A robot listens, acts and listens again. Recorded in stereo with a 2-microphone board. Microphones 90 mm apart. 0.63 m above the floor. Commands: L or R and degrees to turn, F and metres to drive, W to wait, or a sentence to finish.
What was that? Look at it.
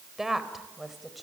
L30
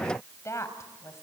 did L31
L145
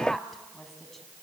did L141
Found it: a woman speaking, straight ahead, over 4 m away.